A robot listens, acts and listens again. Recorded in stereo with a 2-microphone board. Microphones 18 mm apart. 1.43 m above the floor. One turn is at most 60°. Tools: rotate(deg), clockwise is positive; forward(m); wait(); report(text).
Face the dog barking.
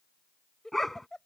rotate(-20)
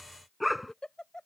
rotate(-30)
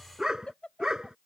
rotate(35)
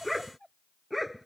report("Found it: a dog barking, straight ahead.")